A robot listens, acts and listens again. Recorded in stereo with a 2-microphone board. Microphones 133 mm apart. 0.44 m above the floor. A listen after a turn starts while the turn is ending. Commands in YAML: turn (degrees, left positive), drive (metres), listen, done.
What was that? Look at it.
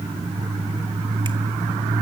listen: true
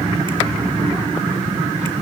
listen: true
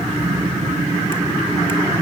done: "I can't make out anything."